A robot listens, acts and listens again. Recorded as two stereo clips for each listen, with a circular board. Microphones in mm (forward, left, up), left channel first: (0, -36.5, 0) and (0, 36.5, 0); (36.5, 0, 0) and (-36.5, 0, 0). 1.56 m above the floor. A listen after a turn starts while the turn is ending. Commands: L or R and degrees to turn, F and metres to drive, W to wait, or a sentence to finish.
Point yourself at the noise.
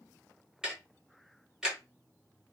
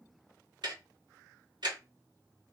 L170
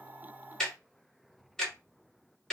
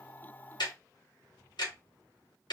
R10
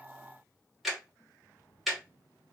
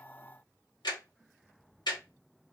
Facing the ticking, 1 to 2 m away.